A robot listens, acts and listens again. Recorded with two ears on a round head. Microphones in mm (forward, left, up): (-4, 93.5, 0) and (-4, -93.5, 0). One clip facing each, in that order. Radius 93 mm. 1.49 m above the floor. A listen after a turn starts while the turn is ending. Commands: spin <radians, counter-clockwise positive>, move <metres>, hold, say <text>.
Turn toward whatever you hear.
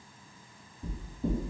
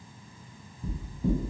spin 0.61
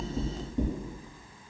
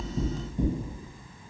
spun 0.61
spin 1.83
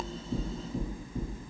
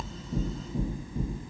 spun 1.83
spin 0.44
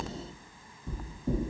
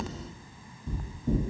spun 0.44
spin 0.17
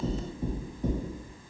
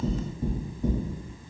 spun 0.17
say Found it: knocking, straight ahead, 1 to 2 m away.